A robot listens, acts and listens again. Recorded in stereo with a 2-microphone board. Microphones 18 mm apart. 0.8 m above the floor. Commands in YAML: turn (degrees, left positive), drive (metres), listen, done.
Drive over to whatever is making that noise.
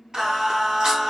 turn: -50
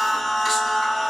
turn: -10
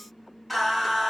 drive: 1.0
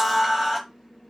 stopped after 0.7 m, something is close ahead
done: "Arrived at the singing, straight ahead."